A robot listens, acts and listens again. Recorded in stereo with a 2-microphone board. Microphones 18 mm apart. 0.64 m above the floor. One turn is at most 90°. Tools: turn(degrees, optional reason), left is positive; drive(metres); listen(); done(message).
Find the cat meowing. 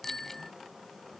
listen()
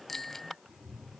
turn(degrees=-90)
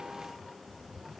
turn(degrees=15, reason="So it is at 15° left.")
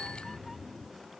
done("Facing the cat meowing.")